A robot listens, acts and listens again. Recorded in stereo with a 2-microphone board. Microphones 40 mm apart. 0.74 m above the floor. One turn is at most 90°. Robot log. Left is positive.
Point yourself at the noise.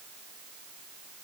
cmd idle
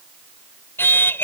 note: The singing: about 70° left or 110° left.
cmd yaw +70
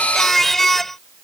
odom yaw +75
note: So it is at 10° left.
cmd yaw +10
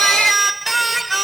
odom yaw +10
end: Found it: singing, straight ahead.